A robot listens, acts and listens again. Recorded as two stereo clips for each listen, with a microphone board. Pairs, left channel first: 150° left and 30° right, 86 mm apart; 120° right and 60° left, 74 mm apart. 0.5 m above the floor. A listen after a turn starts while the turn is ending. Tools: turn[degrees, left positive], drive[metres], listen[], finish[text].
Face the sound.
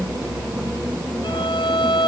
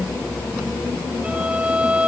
Thought: The violin: 135° left.
Action: turn[135]
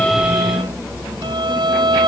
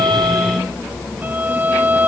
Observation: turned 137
Action: finish[Found it: a violin, straight ahead.]